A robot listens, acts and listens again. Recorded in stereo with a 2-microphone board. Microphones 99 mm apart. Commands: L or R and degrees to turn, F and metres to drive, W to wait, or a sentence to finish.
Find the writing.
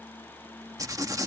R35
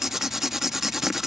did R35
Facing the writing.